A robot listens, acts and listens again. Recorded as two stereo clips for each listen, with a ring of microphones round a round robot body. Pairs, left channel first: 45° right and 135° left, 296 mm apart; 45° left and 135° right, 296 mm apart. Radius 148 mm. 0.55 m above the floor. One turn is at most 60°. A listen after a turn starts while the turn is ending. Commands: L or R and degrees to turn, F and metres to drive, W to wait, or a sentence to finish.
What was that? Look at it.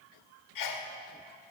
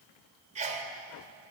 R60
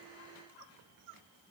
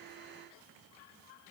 I heard a sneeze from this way, but can't make it out now.